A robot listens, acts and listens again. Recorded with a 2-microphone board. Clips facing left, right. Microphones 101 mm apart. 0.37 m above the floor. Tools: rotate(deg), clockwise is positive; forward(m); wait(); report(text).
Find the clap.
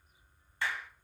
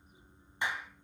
rotate(20)
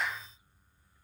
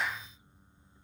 report("Facing the clap, 2 to 4 m away.")